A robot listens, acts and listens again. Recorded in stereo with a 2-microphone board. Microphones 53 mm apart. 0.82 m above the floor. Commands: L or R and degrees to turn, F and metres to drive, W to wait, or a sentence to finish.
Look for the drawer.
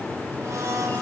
W
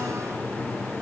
W
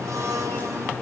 I can't make out a drawer to turn to.